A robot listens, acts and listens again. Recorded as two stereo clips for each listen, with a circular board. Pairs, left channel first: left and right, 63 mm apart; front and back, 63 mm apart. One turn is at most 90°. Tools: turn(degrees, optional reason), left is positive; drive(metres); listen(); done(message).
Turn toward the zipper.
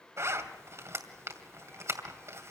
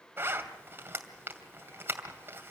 turn(degrees=-90, reason="The zipper: 125° right.")
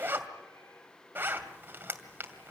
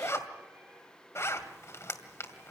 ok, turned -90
turn(degrees=-40, reason="The zipper is now 40° right.")
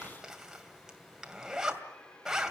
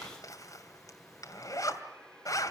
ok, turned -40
turn(degrees=-10, reason="The zipper is now 10° right.")
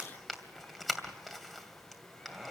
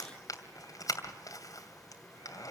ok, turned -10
done("Facing the zipper, 2 to 4 m away.")